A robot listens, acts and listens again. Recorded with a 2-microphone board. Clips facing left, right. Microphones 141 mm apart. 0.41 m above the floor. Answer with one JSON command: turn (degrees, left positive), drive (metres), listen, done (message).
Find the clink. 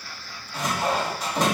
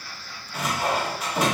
{"listen": true}
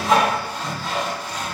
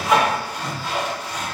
{"listen": true}
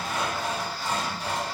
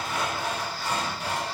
{"done": "I can't make out a clink, only sawing."}